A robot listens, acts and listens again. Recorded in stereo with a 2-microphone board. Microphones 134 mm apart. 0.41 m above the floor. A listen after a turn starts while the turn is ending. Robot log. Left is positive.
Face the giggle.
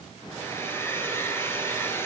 cmd idle
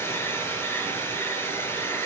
cmd idle
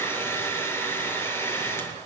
end: I can't make out a giggle, only a hair dryer.